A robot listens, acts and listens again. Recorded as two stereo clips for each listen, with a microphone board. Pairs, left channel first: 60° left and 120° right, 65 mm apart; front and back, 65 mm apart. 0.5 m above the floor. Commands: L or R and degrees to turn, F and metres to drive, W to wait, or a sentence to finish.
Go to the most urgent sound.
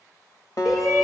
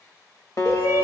R30
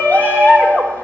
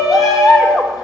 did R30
F1.0
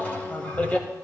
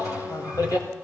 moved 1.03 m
F1.0
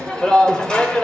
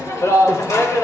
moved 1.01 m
R15
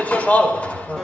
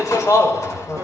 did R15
F1.0
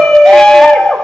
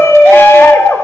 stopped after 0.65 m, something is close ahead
R15
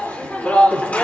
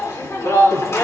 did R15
Arrived at the shout, straight ahead.